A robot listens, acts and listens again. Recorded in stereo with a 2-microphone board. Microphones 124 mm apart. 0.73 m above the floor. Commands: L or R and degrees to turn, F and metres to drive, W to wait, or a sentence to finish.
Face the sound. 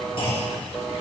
L50
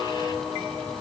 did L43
W
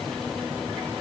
I heard a clunk, but can't make it out now. It was about 5° left or 90° left.